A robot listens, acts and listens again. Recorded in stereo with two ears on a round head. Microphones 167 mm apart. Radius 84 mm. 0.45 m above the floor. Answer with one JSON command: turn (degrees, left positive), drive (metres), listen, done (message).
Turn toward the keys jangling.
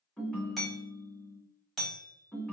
{"listen": true}
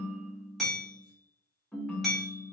{"listen": true}
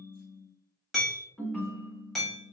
{"done": "I can't make out keys jangling to turn to."}